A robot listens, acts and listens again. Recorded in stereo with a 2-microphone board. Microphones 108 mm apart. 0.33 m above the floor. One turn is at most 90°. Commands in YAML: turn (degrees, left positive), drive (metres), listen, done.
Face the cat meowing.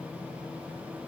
listen: true
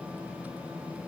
listen: true
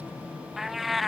turn: 30
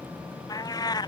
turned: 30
turn: 90
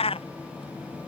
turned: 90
turn: 65
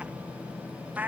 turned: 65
turn: -15
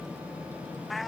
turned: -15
done: "Found it: a cat meowing, straight ahead."